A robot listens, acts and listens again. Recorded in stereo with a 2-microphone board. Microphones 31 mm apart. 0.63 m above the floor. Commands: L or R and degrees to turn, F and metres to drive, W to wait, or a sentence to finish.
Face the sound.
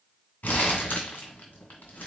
L70
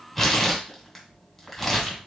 Found it: crumpling, straight ahead.